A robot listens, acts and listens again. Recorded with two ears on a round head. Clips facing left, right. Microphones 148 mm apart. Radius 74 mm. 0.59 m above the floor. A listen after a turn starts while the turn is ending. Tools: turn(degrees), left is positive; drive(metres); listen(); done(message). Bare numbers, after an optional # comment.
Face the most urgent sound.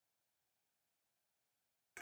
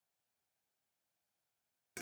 listen()
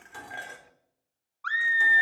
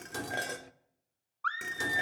turn(30)
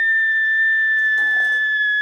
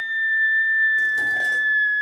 # So it is at 135° left.
turn(135)
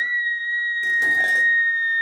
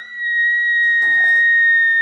# The scream is now 35° right.
turn(-35)
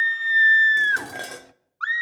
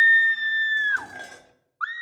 # The scream is now 25° left.
turn(25)
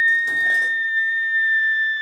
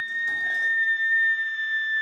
done("Facing the scream, 1 to 2 m away.")